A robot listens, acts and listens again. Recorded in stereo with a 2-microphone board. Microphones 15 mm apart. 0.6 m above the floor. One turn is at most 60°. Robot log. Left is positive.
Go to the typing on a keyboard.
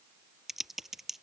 note: The typing on a keyboard: about 15° right or 165° right.
cmd yaw -15
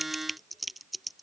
cmd fwd 1.0
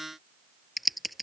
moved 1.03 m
cmd fwd 1.0
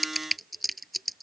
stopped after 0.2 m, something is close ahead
end: Something is in my way. I am facing the typing on a keyboard but have not reached it.